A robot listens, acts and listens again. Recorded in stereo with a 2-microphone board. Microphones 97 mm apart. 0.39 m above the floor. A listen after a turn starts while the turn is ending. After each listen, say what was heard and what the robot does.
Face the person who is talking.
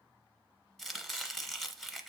Keep listening.
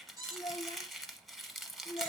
The child speaking: about 65° left or 115° left. Turn 65° left.
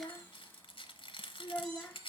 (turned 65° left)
So it is at 15° left. Turn 15° left.
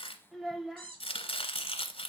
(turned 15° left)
Facing the child speaking, under 1 m away.